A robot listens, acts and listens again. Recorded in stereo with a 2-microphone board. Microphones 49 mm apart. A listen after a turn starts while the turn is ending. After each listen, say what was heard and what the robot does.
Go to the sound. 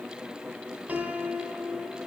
The piano: about 40° right or 140° right. Turn 40° right.
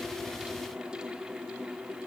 Keep listening.
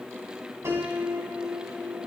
So it is at 100° right. Turn 100° right.
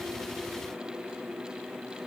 Keep listening.
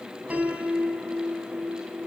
The piano is now 35° right. Turn 35° right.
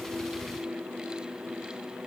Keep listening.
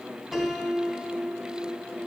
Drive 1.0 m forward.
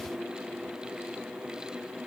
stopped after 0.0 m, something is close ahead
Keep listening.
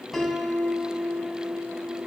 Blocked. The piano is further on, straight ahead.